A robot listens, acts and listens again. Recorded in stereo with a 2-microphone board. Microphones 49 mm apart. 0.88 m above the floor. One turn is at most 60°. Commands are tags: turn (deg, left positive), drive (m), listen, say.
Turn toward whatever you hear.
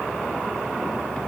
<listen/>
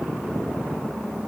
<listen/>
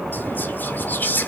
<turn deg="45"/>
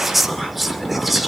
<say>Facing the whispering, 2 to 4 m away.</say>